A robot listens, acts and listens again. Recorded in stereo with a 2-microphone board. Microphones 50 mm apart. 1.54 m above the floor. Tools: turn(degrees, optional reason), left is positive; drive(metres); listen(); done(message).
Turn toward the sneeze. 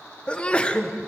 turn(degrees=20, reason="The sneeze: about 20° left or 160° left.")
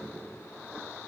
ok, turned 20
listen()
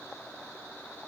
done("I heard a sneeze, but can't make it out now. It was about straight ahead or 140° left.")